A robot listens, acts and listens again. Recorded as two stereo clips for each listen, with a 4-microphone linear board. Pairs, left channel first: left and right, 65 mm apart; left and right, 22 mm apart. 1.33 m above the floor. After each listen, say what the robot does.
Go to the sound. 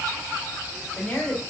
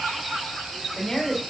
Turn 25° left.
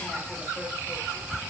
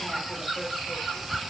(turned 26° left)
Keep listening.
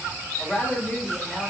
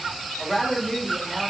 Drive 1.0 m forward.
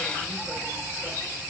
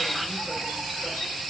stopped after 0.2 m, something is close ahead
Keep listening.
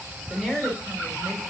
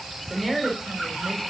Turn 10° right.
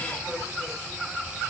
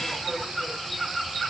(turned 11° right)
Keep listening.
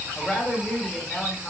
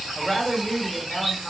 Blocked. The woman speaking is further on, straight ahead.